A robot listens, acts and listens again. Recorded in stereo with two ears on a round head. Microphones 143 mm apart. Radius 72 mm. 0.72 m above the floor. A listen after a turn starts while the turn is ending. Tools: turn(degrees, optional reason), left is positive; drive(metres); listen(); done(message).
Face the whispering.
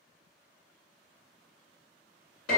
listen()
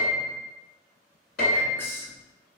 turn(degrees=30)
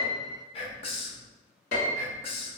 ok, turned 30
turn(degrees=135, reason="So it is at 135° left.")
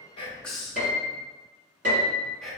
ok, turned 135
done("Found it: whispering, straight ahead.")